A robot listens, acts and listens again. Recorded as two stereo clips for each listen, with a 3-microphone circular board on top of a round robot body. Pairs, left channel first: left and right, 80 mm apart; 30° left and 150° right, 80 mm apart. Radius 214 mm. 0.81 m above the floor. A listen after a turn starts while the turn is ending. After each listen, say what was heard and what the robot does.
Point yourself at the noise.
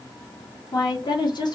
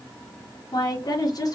The woman speaking: 70° left. Turn 70° left.
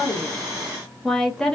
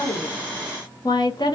The woman speaking is now 10° left. Turn 10° left.
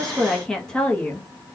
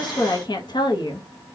The woman speaking is now 15° left. Turn 15° left.
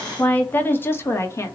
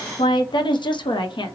The woman speaking is now 35° left. Turn 35° left.
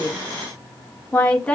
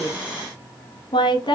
The woman speaking is now 15° left. Turn 15° left.
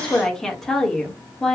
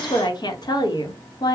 Found it: a woman speaking, straight ahead.